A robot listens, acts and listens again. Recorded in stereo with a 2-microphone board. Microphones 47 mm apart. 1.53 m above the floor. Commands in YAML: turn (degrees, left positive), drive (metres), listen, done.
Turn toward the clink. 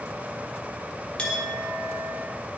turn: 25
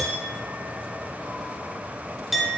done: "Facing the clink."